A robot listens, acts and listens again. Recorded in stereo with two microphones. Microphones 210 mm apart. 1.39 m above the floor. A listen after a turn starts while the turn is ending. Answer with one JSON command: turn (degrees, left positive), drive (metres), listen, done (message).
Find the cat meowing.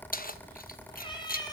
{"turn": 20}
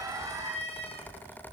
{"turn": 25}
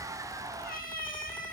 {"turn": 140}
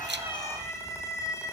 {"turn": 15}
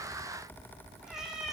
{"done": "Found it: a cat meowing, straight ahead."}